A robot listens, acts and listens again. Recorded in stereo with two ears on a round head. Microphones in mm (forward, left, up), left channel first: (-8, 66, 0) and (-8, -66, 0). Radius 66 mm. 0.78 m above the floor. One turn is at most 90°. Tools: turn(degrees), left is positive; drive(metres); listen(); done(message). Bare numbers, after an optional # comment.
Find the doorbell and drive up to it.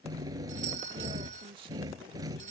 # The doorbell: about 55° right or 125° right.
turn(-55)
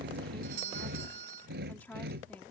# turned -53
# So it is at 70° right.
turn(-70)
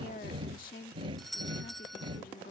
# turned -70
drive(1.0)
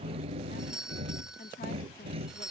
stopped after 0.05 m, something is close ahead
done("Something is in my way. I am facing the doorbell but have not reached it.")